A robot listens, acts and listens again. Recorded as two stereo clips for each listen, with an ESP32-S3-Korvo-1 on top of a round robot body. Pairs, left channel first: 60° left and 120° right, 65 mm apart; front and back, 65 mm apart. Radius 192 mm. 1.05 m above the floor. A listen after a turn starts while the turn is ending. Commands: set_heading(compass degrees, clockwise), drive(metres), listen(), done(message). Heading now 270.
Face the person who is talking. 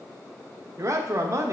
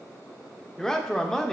set_heading(350)
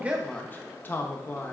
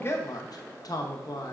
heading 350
done("Found it: a man speaking, straight ahead, under 1 m away.")